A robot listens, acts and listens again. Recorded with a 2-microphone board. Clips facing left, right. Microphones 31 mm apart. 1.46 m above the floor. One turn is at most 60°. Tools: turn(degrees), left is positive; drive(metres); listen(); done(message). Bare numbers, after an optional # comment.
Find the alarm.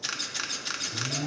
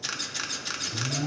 turn(30)
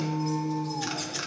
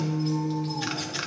# So it is at 145° left.
turn(60)
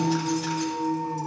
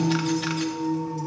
# The alarm is now 90° left.
turn(60)
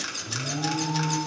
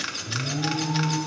# The alarm is now 20° left.
turn(20)
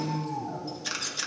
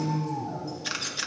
done("Facing the alarm, 2 to 4 m away.")